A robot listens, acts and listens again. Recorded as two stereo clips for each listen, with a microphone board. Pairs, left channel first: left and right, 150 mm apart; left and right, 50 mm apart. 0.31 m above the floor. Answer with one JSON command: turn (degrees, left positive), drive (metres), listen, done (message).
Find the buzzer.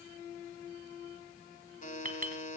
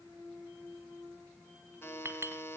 {"turn": 55}
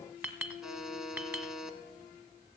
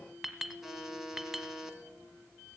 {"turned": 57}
{"done": "Found it: a buzzer, straight ahead."}